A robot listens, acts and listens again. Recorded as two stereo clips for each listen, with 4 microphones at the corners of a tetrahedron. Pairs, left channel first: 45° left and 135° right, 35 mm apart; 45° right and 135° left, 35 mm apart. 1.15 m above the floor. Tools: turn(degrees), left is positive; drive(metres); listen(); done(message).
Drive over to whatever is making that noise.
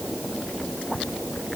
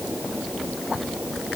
listen()
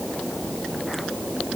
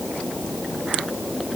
listen()
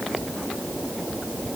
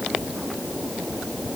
done("I can't make out anything.")